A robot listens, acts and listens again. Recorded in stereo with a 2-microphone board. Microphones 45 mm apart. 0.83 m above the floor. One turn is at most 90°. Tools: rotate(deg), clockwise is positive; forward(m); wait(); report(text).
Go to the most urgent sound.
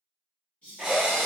rotate(-30)
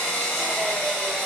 wait()
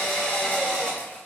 wait()
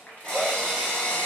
report("I heard a shout, but can't make it out now. It was about straight ahead or 120° left. I did not reach it.")